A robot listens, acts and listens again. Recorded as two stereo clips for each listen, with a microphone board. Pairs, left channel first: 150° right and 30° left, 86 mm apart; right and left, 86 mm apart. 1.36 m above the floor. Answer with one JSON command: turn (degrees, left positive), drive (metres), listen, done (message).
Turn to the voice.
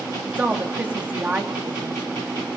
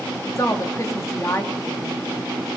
{"turn": -40}
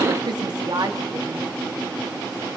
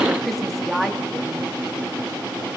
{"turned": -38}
{"done": "Facing the woman speaking."}